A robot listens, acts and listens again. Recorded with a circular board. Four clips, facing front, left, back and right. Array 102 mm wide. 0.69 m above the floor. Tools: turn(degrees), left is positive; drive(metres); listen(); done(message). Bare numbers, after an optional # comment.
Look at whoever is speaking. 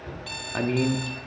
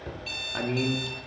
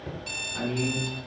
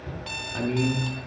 # The man speaking: 15° left.
turn(15)
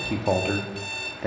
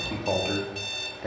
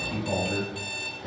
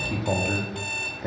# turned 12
done("Facing the man speaking, under 1 m away.")